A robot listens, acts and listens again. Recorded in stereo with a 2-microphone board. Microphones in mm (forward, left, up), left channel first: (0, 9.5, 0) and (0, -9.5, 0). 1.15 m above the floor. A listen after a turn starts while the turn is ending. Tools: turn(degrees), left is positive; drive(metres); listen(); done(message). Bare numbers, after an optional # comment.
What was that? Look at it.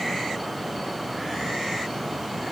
listen()
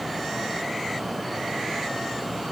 listen()
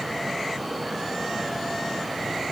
done("I can't make out anything.")